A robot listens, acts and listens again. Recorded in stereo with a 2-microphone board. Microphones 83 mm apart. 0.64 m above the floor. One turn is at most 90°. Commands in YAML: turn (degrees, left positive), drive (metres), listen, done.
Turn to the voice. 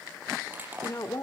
turn: 40
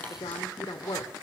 turn: 90
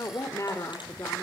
turn: 40
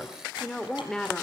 turn: 10
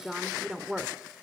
done: "Found it: a woman speaking, straight ahead."